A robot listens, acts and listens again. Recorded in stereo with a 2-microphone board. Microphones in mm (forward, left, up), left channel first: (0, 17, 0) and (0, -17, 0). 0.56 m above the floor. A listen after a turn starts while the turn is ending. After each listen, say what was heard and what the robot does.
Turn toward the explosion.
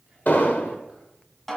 The explosion: about 55° left or 125° left. Turn 55° left.
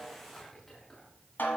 Keep listening.
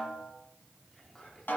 I heard an explosion, but can't make it out now. It was about straight ahead or 70° left.